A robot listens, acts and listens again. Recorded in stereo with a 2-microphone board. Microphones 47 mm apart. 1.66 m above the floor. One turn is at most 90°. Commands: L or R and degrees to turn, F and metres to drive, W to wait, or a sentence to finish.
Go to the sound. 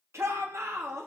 R90
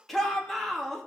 F1.0
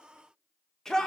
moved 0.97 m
L10
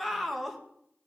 F1.0
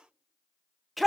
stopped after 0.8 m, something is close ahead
Arrived at the shout, straight ahead.